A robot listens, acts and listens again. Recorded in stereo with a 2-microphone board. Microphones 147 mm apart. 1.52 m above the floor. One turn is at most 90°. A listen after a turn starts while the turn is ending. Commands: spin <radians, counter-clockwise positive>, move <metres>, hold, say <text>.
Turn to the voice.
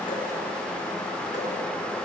hold
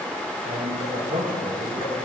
spin -1.13
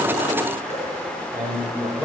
say Facing the man speaking, over 4 m away.